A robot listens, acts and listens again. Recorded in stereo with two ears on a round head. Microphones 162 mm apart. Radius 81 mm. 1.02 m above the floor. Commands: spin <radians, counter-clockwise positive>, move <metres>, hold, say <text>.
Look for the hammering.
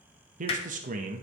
spin 0.52
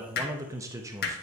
spin 2.09
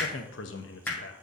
spin 0.17
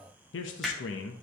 say Found it: hammering, straight ahead, 1 to 2 m away.